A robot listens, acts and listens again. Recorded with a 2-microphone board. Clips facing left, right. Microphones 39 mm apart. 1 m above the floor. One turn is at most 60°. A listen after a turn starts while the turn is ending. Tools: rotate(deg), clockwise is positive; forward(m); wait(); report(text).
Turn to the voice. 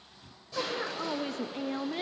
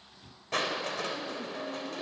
rotate(-60)
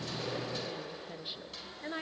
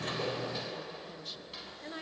rotate(-25)
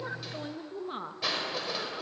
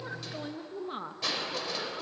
report("Found it: a woman speaking, straight ahead.")